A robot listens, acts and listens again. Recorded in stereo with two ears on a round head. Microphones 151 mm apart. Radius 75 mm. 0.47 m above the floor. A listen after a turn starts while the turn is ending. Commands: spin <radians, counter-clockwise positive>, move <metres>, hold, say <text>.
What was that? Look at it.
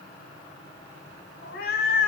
spin 0.96
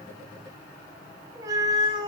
spin -0.52
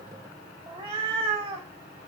spin -0.61
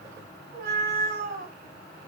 spin -0.87
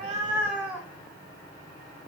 say Found it: a cat meowing, straight ahead.